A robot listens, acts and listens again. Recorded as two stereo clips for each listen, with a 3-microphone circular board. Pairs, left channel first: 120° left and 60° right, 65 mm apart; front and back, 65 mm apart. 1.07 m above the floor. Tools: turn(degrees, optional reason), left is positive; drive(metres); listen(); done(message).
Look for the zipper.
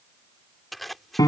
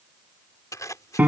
turn(degrees=30, reason="The zipper: 30° left.")
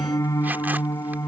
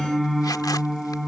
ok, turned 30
listen()
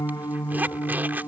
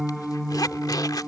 done("Facing the zipper.")